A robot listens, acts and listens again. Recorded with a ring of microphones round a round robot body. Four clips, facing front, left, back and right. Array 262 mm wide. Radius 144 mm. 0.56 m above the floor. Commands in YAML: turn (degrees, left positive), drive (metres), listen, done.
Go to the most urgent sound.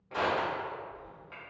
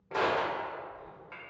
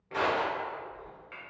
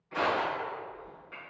listen: true
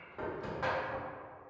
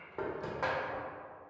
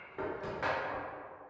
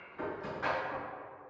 listen: true
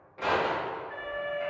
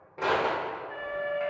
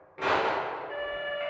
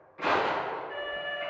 turn: 175
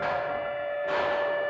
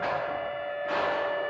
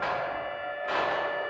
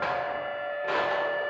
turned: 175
turn: -20
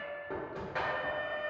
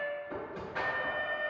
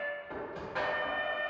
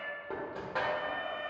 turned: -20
drive: 1.0
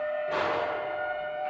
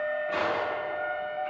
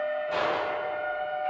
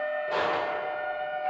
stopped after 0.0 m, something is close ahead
done: "Something is in my way. I am facing the alarm but have not reached it."